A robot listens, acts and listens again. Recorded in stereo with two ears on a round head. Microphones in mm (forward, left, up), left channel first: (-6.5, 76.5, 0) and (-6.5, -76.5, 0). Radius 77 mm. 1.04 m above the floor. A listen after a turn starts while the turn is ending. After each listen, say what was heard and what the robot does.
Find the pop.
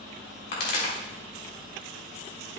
The pop: about 55° left or 125° left. Turn 55° left.
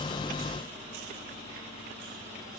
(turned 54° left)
Keep listening.
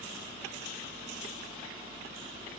I heard a pop, but can't make it out now. It was about 5° left or 70° left.